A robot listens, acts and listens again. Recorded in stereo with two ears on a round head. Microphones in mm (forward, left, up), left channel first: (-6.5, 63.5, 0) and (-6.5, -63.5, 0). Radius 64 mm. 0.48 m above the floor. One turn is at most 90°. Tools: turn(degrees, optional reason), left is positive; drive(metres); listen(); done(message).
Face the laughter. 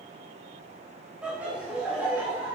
turn(degrees=-30)
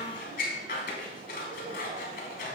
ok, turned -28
turn(degrees=-90, reason="So it is at 135° right.")
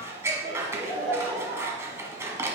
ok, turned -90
turn(degrees=-35, reason="The laughter is now 35° right.")
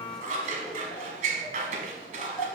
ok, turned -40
done("Found it: laughter, straight ahead, over 4 m away.")